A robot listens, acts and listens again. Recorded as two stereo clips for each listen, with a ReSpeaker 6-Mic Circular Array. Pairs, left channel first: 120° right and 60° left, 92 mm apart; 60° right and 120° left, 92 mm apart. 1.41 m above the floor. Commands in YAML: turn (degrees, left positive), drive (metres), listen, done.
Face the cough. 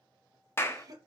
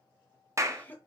turn: 10
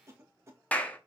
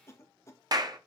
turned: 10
done: "Found it: a cough, straight ahead."